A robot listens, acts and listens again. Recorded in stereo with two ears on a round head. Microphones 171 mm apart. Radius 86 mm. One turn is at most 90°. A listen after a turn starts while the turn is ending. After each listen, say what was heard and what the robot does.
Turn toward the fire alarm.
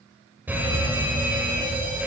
Turn 30° right.
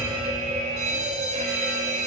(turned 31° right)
So it is at 140° right. Turn 90° right.
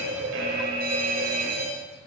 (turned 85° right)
The fire alarm is now 50° right. Turn 50° right.
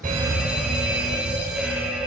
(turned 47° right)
Facing the fire alarm.